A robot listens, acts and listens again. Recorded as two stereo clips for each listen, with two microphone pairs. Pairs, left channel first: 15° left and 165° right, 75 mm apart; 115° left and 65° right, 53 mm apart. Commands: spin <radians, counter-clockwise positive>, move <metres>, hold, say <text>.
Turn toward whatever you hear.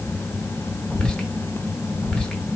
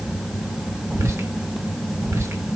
spin -1.13
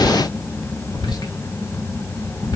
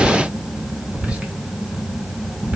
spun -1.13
say Found it: whispering, straight ahead, under 1 m away.